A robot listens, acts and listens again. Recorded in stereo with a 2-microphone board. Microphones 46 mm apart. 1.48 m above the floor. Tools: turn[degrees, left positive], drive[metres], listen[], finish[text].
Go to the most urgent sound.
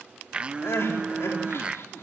Thought: The crying: about 70° left or 110° left.
Action: turn[70]
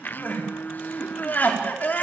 Thought: So it is at 40° left.
Action: turn[40]
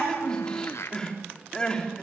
Thought: The crying is now 20° left.
Action: turn[20]
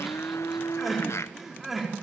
Action: drive[1.0]
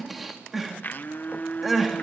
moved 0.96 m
Action: drive[1.0]
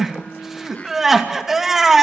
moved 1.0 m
Action: drive[1.0]
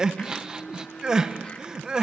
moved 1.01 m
Thought: The crying is now 15° right.
Action: turn[-15]
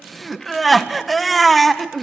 Action: drive[1.0]
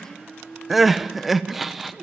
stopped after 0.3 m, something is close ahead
Action: finish[I am next to the crying.]